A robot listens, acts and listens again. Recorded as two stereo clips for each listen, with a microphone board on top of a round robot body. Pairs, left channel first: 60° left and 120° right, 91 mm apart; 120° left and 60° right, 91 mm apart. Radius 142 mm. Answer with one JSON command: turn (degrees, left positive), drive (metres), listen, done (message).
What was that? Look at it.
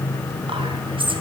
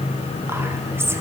{"turn": -120}
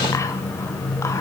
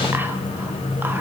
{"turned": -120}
{"listen": true}
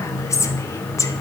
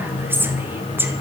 {"done": "Found it: whispering, straight ahead, 2 to 4 m away."}